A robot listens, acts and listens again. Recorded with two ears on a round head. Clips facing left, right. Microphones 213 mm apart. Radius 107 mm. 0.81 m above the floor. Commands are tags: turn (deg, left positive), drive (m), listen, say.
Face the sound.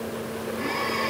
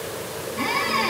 <turn deg="-90"/>
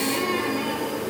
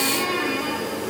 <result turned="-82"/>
<turn deg="-20"/>
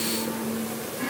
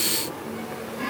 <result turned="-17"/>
<say>Facing the squeak, over 4 m away.</say>